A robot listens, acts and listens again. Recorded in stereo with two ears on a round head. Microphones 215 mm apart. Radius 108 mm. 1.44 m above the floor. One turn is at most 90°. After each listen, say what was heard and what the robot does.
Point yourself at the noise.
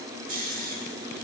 The snoring: about 35° right or 145° right. Turn 35° right.
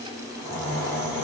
So it is at 110° right. Turn 90° right.
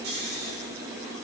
The snoring is now 45° right. Turn 45° right.
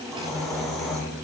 Facing the snoring.